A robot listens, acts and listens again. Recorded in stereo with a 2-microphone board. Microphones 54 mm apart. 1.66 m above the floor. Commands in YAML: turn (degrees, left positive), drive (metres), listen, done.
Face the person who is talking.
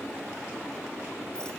listen: true
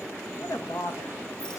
turn: 90
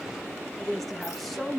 done: "Found it: a woman speaking, straight ahead, 1 to 2 m away."